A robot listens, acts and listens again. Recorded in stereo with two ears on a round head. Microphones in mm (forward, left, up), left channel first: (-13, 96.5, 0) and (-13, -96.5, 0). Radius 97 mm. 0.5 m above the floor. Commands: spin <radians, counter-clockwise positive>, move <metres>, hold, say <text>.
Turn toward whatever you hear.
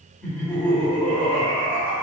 spin 0.52
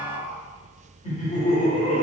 spin 2.44
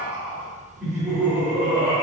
say Facing the laughter.